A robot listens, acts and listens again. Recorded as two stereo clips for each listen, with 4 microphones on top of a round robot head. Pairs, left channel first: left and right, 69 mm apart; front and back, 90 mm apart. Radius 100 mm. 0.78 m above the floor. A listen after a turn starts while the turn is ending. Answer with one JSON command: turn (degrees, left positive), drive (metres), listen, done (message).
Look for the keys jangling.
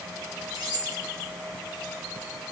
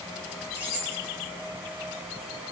{"turn": -110}
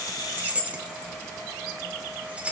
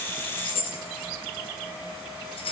{"turn": -15}
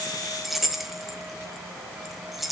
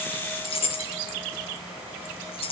{"done": "Facing the keys jangling."}